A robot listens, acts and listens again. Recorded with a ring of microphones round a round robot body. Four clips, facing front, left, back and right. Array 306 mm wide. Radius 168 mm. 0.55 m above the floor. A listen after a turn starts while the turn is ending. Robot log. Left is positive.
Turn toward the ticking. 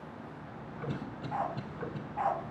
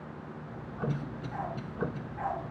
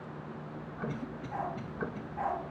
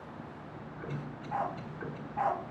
note: The ticking: 100° left.
cmd yaw +100
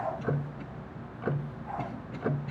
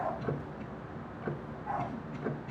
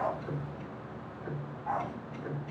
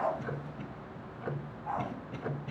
end: Facing the ticking, under 1 m away.